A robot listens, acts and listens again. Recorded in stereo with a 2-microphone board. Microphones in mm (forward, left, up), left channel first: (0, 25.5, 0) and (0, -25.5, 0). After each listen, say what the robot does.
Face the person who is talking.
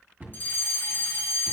Keep listening.
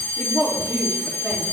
Turn 20° left.
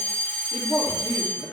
Turn 140° left.
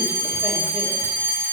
Keep listening.
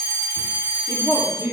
Turn 15° right.
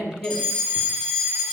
Facing the woman speaking.